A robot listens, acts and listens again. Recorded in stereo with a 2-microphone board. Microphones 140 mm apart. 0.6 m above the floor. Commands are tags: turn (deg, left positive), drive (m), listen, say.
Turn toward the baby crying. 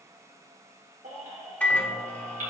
<turn deg="-90"/>
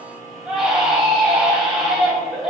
<say>Facing the baby crying, 2 to 4 m away.</say>